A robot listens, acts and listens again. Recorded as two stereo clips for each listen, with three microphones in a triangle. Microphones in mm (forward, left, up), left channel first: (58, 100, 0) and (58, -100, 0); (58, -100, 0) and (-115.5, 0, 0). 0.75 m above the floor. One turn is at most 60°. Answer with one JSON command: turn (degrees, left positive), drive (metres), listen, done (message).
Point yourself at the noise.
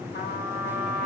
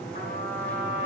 {"turn": 60}
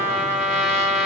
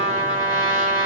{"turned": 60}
{"turn": 60}
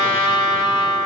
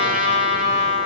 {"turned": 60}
{"turn": 15}
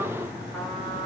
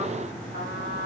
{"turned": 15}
{"done": "Found it: a trumpet, straight ahead."}